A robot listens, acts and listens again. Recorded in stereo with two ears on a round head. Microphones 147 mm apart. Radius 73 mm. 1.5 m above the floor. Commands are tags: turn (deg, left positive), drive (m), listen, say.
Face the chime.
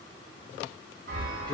<turn deg="-55"/>
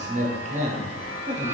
<turn deg="-45"/>
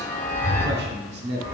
<turn deg="15"/>
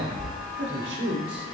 <say>Found it: a chime, straight ahead, 1 to 2 m away.</say>